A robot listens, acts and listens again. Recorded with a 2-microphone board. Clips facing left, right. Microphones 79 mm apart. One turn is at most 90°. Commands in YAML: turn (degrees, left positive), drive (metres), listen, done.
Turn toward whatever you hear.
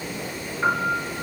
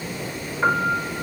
turn: -20
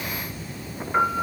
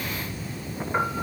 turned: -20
done: "Facing the piano, 2 to 4 m away."